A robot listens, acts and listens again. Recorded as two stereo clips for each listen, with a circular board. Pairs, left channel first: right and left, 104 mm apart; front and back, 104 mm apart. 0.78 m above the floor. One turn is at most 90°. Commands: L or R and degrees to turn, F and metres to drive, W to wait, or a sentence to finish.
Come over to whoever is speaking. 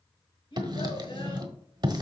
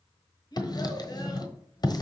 R55
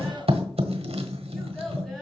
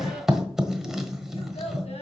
F1.0
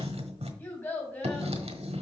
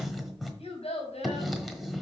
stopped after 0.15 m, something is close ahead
R20
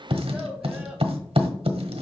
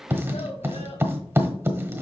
W
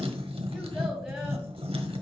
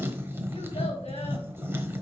W
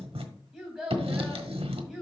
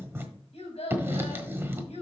Something is in my way. I am facing the child speaking but have not reached it.